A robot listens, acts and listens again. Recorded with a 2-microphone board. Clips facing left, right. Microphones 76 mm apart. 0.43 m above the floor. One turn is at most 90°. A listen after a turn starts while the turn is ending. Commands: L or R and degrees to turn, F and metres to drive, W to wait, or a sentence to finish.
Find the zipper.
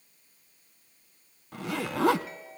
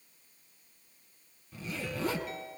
L90
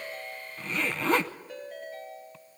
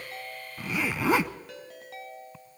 R10
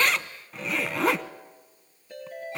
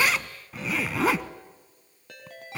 Facing the zipper.